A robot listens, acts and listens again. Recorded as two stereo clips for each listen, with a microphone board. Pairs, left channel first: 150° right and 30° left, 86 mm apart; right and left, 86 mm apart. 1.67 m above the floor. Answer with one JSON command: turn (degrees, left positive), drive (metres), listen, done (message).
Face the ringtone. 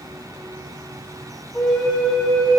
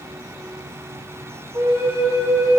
{"listen": true}
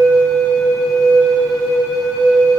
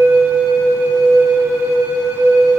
{"listen": true}
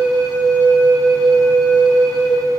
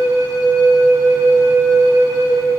{"done": "I can't make out a ringtone, only a flute."}